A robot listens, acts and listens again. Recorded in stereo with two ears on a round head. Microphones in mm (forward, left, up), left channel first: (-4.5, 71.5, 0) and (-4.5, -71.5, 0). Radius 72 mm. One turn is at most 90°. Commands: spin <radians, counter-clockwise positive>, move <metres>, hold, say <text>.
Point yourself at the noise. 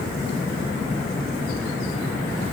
hold
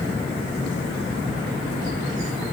hold
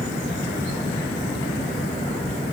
say I can't make out anything.